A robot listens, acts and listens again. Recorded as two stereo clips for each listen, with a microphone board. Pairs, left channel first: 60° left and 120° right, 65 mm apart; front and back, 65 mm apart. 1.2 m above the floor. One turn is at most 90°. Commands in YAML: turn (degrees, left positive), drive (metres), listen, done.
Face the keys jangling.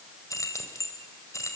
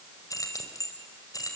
turn: 25
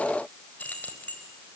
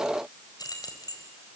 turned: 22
done: "Facing the keys jangling."